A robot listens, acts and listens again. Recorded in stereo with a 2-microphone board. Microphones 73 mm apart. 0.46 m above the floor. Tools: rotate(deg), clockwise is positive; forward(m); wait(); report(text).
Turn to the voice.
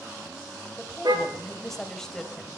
rotate(-30)
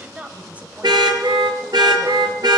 rotate(25)
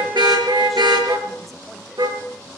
wait()
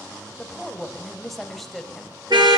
report("Facing the woman speaking, 2 to 4 m away.")